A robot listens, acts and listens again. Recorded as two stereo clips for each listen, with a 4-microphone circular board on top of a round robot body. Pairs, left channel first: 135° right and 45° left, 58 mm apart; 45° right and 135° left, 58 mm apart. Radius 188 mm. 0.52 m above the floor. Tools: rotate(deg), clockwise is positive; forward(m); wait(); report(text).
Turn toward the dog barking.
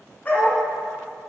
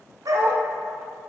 rotate(-170)
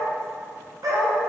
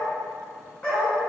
rotate(-35)
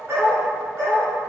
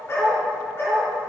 report("Facing the dog barking.")